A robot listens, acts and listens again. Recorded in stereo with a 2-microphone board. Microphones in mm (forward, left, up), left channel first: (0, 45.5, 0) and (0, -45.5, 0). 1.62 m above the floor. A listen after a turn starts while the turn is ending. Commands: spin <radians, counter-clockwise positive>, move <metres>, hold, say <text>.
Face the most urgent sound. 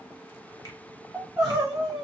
spin 0.52
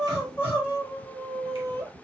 spin 2.71
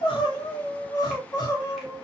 spin 0.70
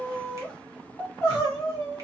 spin 0.17
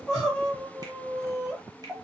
say Facing the crying.